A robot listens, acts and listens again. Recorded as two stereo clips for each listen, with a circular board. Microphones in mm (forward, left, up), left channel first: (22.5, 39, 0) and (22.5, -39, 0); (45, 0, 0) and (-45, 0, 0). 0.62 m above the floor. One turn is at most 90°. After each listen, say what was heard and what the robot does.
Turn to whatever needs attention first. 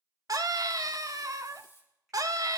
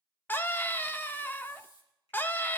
The scream: 65° right. Turn 65° right.
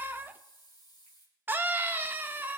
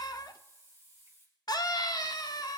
The scream is now 30° right. Turn 30° right.
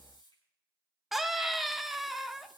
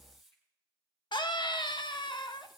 Found it: a scream, straight ahead.